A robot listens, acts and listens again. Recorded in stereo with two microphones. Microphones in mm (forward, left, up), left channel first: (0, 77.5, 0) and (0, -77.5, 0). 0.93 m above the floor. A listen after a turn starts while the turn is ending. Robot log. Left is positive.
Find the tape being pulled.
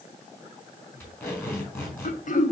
note: The tape being pulled: about 15° left or 165° left.
cmd yaw +15
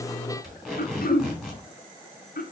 end: Found it: tape being pulled, straight ahead, 2 to 4 m away.